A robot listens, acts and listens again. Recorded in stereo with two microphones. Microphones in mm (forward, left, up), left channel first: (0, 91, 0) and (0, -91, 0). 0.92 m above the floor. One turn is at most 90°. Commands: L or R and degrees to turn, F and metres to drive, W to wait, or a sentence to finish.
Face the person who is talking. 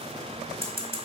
W
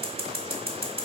W
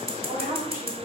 R20
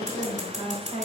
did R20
R30
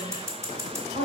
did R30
R90
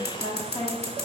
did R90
R30
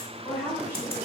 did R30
L10
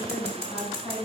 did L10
Found it: a woman speaking, straight ahead, 2 to 4 m away.